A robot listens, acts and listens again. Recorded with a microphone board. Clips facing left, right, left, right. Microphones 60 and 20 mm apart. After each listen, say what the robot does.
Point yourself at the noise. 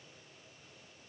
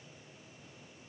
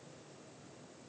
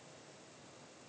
Keep listening.
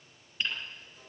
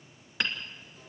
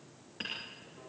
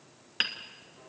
Turn 90° right.
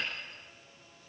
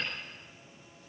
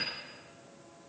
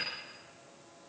Keep listening.
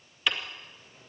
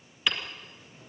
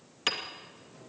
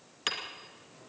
Facing the hammering.